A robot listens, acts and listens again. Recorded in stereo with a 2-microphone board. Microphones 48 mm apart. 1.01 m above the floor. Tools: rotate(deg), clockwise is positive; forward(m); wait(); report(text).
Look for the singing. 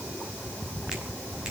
wait()
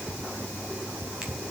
wait()
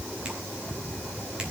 report("I can't make out singing.")